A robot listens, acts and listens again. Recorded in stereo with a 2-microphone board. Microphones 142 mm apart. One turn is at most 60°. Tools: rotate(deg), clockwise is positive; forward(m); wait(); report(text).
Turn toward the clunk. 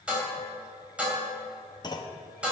rotate(-30)
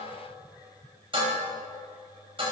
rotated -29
wait()
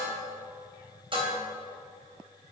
report("I heard a clunk, but can't make it out now. It was about straight ahead or 120° left.")